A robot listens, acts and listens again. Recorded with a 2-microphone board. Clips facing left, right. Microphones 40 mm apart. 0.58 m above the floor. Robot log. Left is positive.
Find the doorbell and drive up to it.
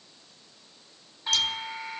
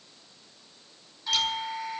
note: The doorbell: about 30° left or 150° left.
cmd yaw +30
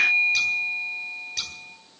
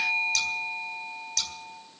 note: So it is at 115° left.
cmd yaw +115
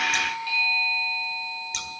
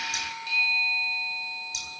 note: The doorbell is now 20° left.
cmd yaw +20
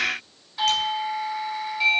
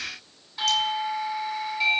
cmd fwd 1.0
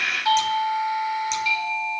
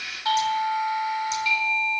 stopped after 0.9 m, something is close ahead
end: Blocked. The doorbell is further on, straight ahead.